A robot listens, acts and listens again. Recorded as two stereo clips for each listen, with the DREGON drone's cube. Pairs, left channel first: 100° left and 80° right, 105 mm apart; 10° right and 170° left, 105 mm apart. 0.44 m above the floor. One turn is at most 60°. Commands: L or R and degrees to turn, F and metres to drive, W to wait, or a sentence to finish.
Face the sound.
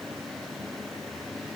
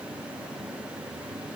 W
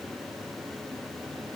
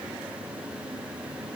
W
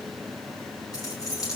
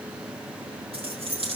L60
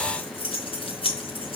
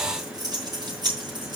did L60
L60
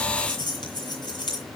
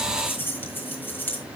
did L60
L60
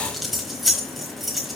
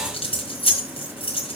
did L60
L10
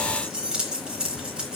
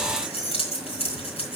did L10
Facing the keys jangling, 2 to 4 m away.